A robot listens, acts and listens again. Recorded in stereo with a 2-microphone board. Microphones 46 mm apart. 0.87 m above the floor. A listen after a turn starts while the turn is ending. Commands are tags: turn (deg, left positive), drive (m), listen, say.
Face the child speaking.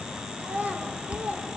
<turn deg="-30"/>
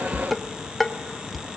<listen/>
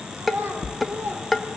<turn deg="-120"/>
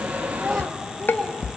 <turn deg="10"/>
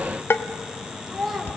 <say>Facing the child speaking, 2 to 4 m away.</say>